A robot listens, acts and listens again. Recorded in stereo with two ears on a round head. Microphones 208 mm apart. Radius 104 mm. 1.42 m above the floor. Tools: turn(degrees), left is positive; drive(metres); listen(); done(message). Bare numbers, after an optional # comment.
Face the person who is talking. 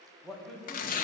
turn(30)
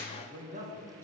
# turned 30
# So it is at 30° right.
turn(-30)
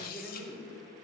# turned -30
done("Found it: a man speaking, straight ahead, 1 to 2 m away.")